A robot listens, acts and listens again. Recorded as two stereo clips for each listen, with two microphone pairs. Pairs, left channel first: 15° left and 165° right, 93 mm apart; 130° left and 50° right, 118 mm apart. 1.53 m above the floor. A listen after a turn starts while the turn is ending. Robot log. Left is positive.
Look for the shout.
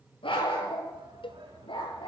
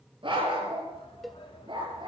note: The shout: 175° left.
cmd yaw +175
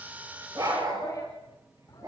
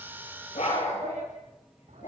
cmd idle
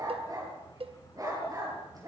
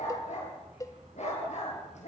cmd idle
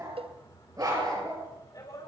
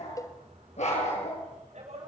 note: The shout is now 35° right.
cmd yaw -35
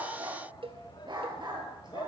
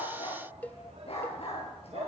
note: The shout is now 20° right.
cmd yaw -20
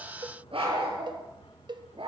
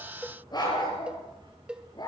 cmd idle
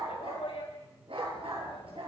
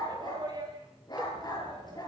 end: Facing the shout, over 4 m away.